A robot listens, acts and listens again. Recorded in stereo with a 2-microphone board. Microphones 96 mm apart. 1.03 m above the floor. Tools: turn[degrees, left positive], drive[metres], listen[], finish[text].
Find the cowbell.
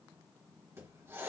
Action: listen[]
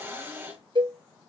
Thought: The cowbell: about 60° right or 120° right.
Action: turn[-60]
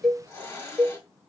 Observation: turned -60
Action: finish[Facing the cowbell.]